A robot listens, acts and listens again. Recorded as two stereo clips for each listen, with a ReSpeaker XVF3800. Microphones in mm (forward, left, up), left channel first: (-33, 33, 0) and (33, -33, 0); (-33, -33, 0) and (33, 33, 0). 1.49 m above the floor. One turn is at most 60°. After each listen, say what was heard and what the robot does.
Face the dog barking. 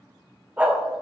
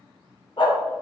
The dog barking: 115° right. Turn 60° right.
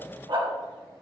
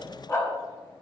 The dog barking is now 80° right. Turn 60° right.
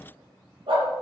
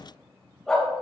The dog barking is now 50° right. Turn 50° right.
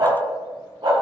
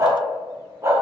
The dog barking is now 10° right. Turn 10° right.
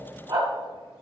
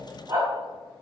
Facing the dog barking.